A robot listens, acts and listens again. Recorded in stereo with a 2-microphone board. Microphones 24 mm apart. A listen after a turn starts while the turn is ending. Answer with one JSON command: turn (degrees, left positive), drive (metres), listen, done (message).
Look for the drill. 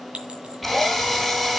{"turn": 30}
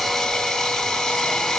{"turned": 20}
{"turn": 160}
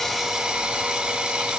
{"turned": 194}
{"turn": -30}
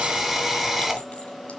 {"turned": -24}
{"turn": -10}
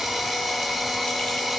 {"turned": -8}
{"done": "Found it: a drill, straight ahead, 2 to 4 m away."}